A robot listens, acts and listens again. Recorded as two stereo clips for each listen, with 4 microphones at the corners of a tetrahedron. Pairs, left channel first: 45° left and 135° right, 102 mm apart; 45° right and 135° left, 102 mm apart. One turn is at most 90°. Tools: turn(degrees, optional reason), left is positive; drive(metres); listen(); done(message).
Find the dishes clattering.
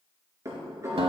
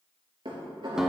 turn(degrees=90, reason="The dishes clattering: 170° left.")
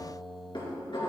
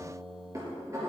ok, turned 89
turn(degrees=80, reason="The dishes clattering is now 80° left.")
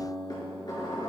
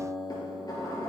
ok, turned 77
done("Found it: dishes clattering, straight ahead.")